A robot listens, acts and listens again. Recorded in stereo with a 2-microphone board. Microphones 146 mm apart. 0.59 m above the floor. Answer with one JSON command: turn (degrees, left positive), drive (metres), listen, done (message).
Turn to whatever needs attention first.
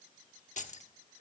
{"listen": true}
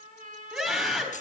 {"turn": -30}
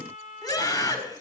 {"turn": 20}
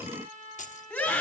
{"done": "Found it: a scream, straight ahead."}